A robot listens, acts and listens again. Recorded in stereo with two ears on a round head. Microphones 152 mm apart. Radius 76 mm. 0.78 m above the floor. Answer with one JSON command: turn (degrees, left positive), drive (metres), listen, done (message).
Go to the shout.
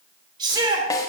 {"turn": -25}
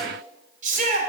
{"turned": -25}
{"turn": -130}
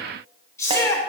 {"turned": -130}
{"turn": 20}
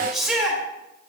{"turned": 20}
{"drive": 1.0}
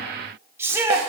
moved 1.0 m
{"turn": -15}
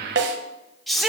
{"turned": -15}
{"drive": 1.0}
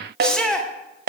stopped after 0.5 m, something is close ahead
{"done": "Arrived at the shout, straight ahead."}